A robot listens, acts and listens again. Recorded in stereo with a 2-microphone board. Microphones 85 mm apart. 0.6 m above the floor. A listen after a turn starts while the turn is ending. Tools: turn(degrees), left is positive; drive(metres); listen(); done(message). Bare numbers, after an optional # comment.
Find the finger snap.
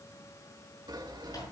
listen()
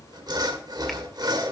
listen()
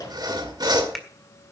done("I can't make out a finger snap to turn to.")